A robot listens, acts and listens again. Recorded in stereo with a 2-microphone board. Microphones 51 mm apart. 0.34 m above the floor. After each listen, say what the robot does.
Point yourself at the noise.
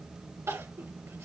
Turn 90° right.
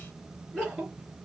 Found it: crying, straight ahead, 2 to 4 m away.